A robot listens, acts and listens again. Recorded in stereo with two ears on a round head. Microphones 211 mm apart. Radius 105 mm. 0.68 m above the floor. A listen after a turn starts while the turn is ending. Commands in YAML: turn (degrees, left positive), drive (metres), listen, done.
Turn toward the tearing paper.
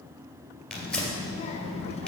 turn: 30
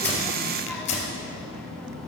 turn: 150
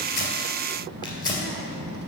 turn: 20
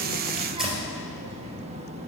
done: "Found it: tearing paper, straight ahead, 2 to 4 m away."